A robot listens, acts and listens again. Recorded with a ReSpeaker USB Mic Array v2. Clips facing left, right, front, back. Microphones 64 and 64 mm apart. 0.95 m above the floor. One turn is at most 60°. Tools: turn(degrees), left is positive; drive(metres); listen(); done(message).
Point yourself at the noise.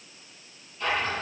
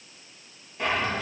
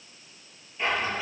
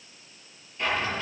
turn(degrees=-60)
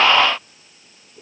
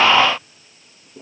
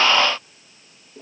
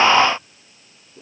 turn(degrees=-40)
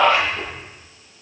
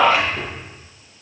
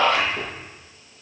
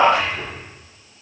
turn(degrees=-15)
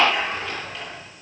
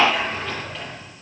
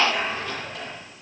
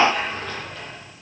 done("Facing the drawer, over 4 m away.")